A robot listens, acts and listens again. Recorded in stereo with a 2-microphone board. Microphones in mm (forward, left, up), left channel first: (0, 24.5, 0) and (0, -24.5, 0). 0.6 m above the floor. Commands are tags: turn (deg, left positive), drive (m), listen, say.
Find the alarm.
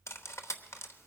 <listen/>
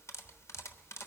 <listen/>
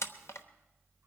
<say>I can't make out an alarm to turn to.</say>